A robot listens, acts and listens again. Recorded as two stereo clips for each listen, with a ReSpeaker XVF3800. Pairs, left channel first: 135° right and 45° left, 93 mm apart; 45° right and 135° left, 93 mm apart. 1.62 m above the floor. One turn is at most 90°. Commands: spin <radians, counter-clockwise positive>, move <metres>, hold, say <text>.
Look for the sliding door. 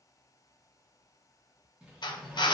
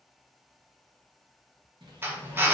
spin 1.57
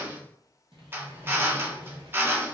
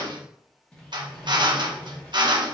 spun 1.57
spin 0.52
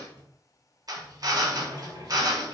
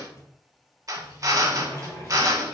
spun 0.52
spin 0.17
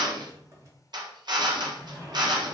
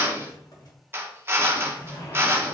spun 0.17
say Found it: a sliding door, straight ahead.